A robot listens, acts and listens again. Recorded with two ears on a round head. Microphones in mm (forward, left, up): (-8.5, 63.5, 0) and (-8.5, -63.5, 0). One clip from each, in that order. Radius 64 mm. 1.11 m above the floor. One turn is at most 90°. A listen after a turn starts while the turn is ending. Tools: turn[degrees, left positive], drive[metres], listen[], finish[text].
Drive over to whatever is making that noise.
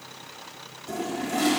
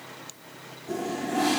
Thought: The toilet flushing: about 50° left or 130° left.
Action: turn[50]
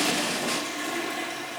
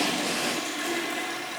Action: drive[1.0]
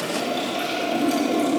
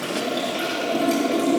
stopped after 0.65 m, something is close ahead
Action: finish[Something is in my way. I am facing the toilet flushing but have not reached it.]